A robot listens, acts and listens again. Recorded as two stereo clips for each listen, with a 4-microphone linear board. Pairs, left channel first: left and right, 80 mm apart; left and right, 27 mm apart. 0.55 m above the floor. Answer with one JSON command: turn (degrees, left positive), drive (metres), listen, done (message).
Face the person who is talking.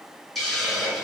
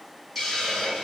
{"listen": true}
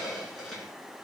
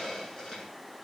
{"listen": true}
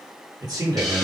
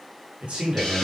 {"turn": -55}
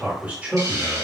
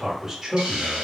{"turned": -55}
{"turn": -25}
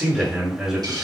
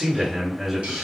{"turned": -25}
{"turn": -10}
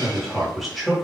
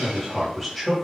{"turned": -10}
{"done": "Found it: a man speaking, straight ahead."}